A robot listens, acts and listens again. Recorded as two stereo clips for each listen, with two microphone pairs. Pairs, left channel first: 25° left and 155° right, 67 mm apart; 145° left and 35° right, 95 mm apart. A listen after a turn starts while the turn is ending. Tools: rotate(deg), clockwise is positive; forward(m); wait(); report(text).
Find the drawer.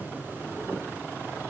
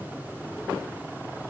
wait()
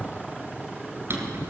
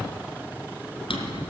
rotate(-155)
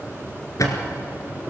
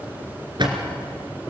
report("Found it: a drawer, straight ahead, 2 to 4 m away.")